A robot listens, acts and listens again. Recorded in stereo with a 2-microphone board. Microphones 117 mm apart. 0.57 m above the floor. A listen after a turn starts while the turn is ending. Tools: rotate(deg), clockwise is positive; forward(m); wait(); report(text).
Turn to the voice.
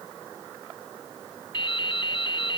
wait()
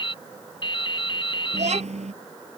rotate(70)
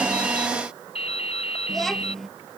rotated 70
report("Found it: a child speaking, straight ahead.")